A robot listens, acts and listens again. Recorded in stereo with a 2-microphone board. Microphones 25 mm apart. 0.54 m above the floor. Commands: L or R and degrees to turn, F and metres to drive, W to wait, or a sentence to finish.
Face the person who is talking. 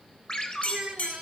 R35
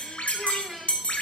W
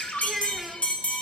Found it: a child speaking, straight ahead.